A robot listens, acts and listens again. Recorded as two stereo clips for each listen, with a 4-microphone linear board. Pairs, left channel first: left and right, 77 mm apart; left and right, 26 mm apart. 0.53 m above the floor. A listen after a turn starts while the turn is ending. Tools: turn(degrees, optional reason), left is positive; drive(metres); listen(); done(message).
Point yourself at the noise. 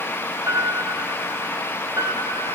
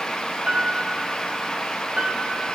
turn(degrees=-50, reason="The piano: about 50° right or 130° right.")
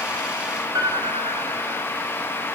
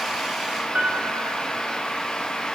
turn(degrees=-75, reason="So it is at 75° right.")
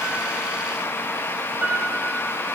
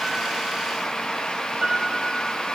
turn(degrees=-25, reason="The piano is now 25° right.")
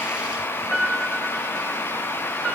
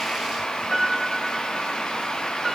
turn(degrees=-15, reason="The piano is now 15° right.")
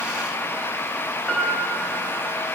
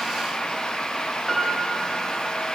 done("Facing the piano, 2 to 4 m away.")